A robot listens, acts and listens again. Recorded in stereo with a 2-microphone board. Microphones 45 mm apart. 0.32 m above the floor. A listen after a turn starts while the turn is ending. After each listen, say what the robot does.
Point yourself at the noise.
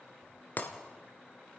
Turn 40° left.
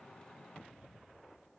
Keep listening.
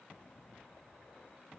I heard breaking glass, but can't make it out now. It was about straight ahead or 100° left.